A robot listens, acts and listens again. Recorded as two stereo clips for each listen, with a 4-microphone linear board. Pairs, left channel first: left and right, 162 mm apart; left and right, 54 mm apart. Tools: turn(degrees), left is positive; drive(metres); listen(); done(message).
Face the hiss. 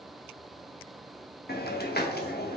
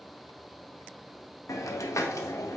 turn(degrees=90)
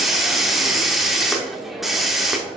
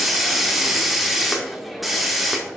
done("Facing the hiss.")